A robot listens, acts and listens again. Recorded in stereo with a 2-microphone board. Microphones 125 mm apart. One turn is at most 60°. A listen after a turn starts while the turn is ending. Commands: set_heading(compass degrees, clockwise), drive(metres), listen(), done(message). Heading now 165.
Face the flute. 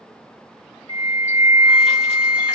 set_heading(205)
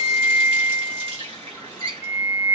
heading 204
done("Facing the flute, 2 to 4 m away.")